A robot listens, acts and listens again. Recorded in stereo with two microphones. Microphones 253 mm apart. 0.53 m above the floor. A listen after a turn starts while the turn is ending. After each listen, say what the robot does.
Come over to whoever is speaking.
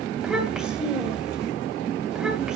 Turn 30° left.
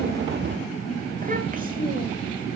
Turn 30° right.
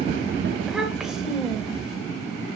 Drive 1.0 m forward.
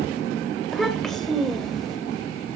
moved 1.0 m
Drive 1.0 m forward.
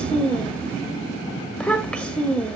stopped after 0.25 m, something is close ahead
I am next to the child speaking.